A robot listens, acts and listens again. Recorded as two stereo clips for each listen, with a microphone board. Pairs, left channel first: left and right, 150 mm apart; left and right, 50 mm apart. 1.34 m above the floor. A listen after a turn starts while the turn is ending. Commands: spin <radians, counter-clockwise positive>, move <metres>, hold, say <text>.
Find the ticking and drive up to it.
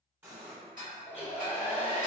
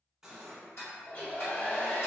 spin 1.13
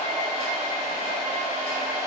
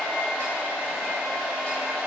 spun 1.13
hold
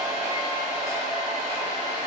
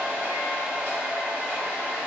hold
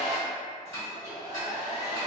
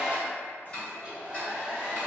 spin 0.44
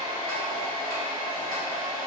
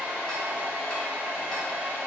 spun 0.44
hold
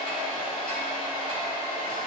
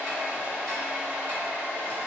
hold
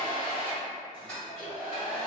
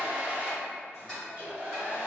spin 0.17
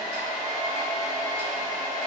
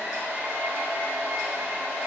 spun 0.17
hold
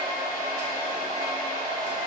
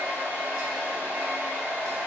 hold
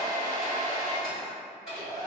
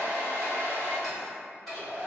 say I heard ticking from this way, but can't make it out now. I did not reach it.